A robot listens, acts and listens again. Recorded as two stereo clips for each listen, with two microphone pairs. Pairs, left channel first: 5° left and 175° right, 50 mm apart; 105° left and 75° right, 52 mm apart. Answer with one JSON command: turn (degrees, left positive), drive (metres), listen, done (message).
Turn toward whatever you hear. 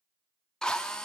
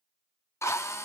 {"turn": 80}
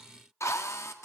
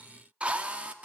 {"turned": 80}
{"turn": -10}
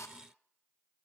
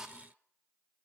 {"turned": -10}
{"done": "Found it: a drill, straight ahead."}